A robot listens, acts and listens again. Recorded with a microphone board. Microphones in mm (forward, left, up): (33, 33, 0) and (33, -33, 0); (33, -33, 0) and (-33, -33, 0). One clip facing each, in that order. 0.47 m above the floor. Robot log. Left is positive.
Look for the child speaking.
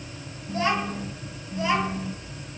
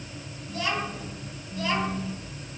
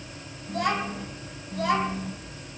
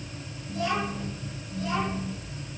note: The child speaking: 15° left.
cmd yaw +15
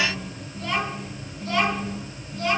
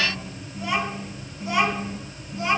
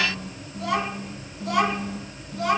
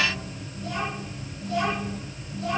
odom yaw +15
note: The child speaking is now 20° right.
cmd yaw -20
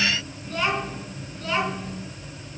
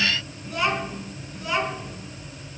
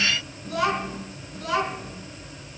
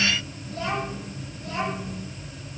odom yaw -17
note: The child speaking is now 10° right.
cmd yaw -10
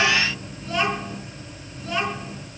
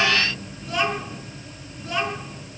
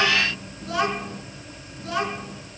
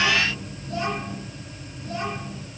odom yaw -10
end: Found it: a child speaking, straight ahead.